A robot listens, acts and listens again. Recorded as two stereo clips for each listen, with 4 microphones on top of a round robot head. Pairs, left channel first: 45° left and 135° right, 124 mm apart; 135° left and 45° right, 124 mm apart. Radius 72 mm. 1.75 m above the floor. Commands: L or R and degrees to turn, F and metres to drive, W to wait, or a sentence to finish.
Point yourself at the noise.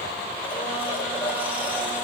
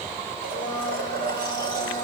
R60
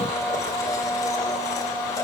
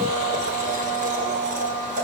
R20
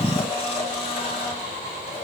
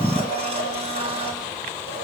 Facing the blender, over 4 m away.